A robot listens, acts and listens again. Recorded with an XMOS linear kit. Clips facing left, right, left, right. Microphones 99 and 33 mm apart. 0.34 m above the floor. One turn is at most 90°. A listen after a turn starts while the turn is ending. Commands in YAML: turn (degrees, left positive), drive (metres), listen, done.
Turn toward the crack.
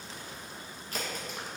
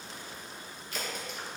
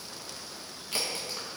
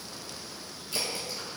turn: 45
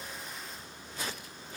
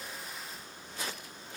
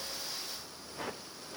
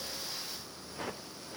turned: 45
listen: true
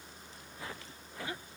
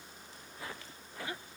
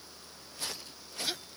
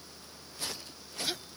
done: "I heard a crack, but can't make it out now. It was about straight ahead or 90° left."